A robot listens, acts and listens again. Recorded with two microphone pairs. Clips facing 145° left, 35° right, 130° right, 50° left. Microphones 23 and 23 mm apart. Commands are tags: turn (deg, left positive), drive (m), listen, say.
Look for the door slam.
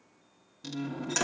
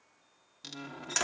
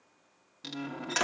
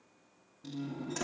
<turn deg="-110"/>
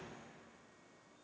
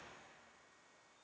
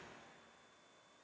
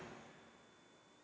<say>I heard a door slam from this way, but can't make it out now.</say>